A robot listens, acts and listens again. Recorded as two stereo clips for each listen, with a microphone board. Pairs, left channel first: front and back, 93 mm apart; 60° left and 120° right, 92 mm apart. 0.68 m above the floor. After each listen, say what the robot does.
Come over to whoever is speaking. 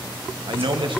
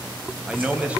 Turn 165° left.
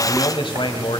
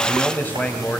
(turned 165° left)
Turn 10° right.
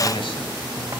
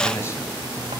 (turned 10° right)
Keep listening.
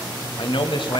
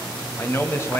Drive 1.0 m forward.
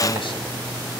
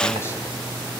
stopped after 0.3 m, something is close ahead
Keep listening.
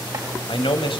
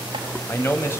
Blocked. The man speaking is further on, straight ahead.